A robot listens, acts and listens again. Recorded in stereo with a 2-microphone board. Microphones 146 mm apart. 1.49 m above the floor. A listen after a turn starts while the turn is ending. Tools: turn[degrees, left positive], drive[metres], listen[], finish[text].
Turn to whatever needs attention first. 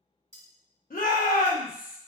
Thought: The shout: about 75° left or 105° left.
Action: turn[75]
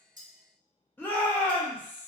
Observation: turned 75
Thought: So it is at 15° left.
Action: turn[15]
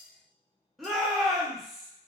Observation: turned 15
Action: finish[Found it: a shout, straight ahead, under 1 m away.]